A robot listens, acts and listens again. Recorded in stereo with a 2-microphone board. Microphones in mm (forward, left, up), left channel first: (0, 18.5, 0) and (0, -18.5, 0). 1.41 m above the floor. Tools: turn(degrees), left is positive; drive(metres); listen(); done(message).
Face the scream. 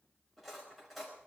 listen()
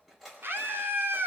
turn(degrees=-65)
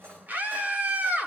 turn(degrees=-50)
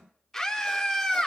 done("Facing the scream.")